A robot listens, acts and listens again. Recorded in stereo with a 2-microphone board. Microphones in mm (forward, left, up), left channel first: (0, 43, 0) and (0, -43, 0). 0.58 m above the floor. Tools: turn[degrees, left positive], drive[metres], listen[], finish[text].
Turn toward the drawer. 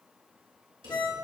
Thought: The drawer: about 65° right or 115° right.
Action: turn[-65]
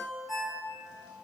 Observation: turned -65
Action: listen[]
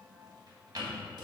Thought: So it is at 50° right.
Action: turn[-50]
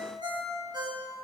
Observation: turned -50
Action: listen[]
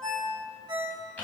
Thought: The drawer is now 20° left.
Action: turn[20]
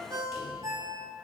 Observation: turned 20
Action: listen[]
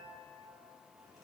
Action: listen[]
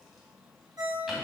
Action: finish[Facing the drawer, 2 to 4 m away.]